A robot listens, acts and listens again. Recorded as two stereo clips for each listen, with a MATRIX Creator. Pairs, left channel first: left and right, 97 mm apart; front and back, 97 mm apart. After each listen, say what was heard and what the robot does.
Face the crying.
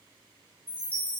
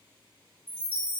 Keep listening.
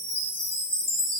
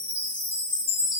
Keep listening.
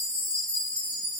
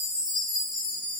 I can't make out crying, only a chime.